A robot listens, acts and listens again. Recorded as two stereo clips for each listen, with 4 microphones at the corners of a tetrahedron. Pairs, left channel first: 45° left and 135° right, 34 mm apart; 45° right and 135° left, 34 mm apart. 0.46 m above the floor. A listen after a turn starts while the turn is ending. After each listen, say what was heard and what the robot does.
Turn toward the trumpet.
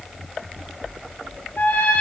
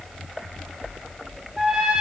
The trumpet: 60° left. Turn 60° left.
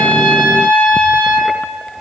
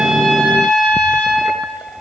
The trumpet is now 10° left. Turn 10° left.
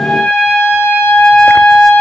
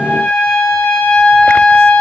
Facing the trumpet, 2 to 4 m away.